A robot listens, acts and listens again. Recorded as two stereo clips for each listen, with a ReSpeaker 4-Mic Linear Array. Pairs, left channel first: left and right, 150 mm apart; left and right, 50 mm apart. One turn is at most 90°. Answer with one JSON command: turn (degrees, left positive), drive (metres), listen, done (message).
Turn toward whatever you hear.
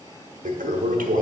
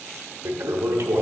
{"turn": -65}
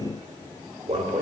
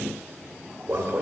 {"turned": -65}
{"turn": -45}
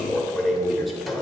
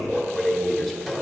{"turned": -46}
{"done": "Found it: a toilet flushing, straight ahead."}